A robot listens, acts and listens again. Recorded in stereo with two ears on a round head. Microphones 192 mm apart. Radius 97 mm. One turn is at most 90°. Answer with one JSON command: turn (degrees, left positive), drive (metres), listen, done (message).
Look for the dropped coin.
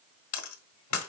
{"turn": 90}
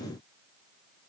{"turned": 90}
{"done": "Facing where the dropped coin came from. I can't hear it now."}